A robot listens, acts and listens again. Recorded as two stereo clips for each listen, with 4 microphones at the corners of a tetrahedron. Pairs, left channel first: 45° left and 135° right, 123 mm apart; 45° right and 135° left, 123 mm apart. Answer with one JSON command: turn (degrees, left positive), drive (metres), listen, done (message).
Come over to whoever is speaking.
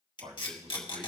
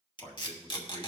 {"turn": -100}
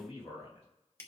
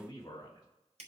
{"turn": 15}
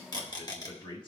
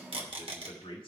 {"drive": 1.0}
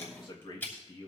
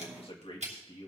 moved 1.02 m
{"drive": 1.0}
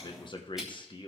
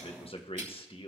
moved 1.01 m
{"drive": 1.0}
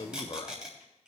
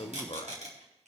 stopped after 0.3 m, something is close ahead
{"done": "I am next to the man speaking."}